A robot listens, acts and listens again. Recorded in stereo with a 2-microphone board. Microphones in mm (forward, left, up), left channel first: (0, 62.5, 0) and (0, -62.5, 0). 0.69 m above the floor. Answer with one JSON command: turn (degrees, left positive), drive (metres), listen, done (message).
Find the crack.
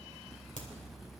{"turn": 90}
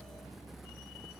{"done": "I heard a crack from this way, but can't make it out now."}